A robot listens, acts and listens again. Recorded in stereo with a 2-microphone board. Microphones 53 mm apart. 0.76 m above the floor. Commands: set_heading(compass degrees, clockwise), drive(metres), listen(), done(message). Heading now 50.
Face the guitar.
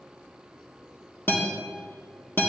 set_heading(10)
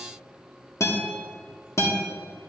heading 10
set_heading(275)
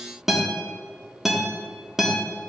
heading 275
done("Facing the guitar.")